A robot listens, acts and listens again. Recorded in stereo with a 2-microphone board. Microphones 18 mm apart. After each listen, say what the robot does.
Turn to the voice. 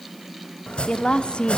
Turn 60° left.
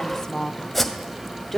Turn 15° left.
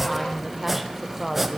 Turn 10° right.
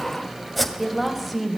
Facing the woman speaking.